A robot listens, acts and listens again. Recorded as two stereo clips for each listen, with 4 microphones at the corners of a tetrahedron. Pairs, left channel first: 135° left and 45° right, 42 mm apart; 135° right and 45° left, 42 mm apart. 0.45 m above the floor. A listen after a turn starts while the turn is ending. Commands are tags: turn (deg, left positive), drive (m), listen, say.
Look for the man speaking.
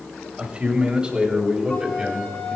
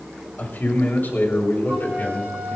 <turn deg="-110"/>
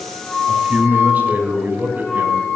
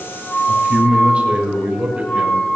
<turn deg="-15"/>
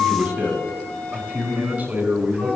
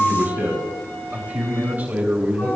<say>Found it: a man speaking, straight ahead.</say>